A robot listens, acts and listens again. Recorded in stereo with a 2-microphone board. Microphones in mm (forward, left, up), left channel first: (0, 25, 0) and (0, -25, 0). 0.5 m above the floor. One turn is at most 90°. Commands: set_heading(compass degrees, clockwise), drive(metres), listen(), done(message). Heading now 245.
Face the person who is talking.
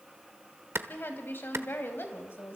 set_heading(190)
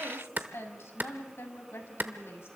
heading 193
set_heading(138)
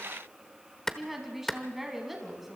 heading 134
done("Found it: a woman speaking, straight ahead, 2 to 4 m away.")